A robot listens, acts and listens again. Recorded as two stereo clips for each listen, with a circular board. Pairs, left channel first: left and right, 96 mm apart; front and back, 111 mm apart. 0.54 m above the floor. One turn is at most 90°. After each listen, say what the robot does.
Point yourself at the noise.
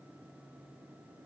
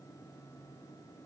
Keep listening.
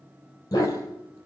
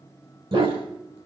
Turn 90° left.
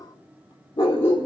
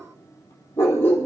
Turn 70° left.
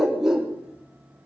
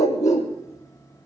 Found it: a dog barking, straight ahead, 2 to 4 m away.